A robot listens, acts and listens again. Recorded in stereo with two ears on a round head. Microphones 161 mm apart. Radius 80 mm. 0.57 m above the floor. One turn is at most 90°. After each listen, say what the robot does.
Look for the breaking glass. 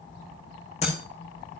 Turn 40° left.
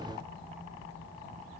Keep listening.
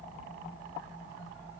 I heard breaking glass, but can't make it out now. It was about straight ahead or 100° left.